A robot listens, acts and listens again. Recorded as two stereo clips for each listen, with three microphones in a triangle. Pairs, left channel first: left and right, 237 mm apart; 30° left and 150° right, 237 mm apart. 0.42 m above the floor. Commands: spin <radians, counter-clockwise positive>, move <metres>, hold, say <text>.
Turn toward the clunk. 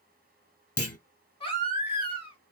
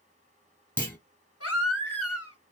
spin 1.92
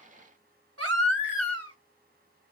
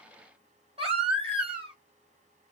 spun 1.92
say Facing where the clunk came from. I can't hear it now.